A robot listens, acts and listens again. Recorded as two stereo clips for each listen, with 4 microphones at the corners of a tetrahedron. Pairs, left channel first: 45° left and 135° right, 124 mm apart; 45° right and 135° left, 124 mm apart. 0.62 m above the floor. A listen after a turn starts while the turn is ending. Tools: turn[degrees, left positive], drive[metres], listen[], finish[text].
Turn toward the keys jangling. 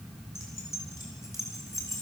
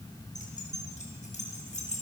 Thought: The keys jangling: 20° right.
Action: turn[-20]
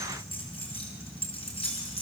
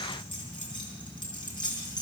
Action: finish[Found it: keys jangling, straight ahead.]